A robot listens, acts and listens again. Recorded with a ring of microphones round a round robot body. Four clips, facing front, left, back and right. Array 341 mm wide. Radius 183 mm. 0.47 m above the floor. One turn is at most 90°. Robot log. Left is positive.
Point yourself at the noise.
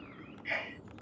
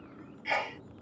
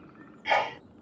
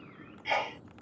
note: The sneeze: 175° right.
cmd yaw -90
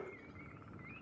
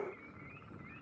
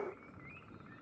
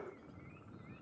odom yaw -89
note: Nothing new. It was at 85° right.
cmd yaw -85
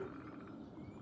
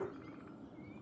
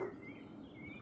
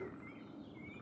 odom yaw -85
end: I heard a sneeze from this way, but can't make it out now.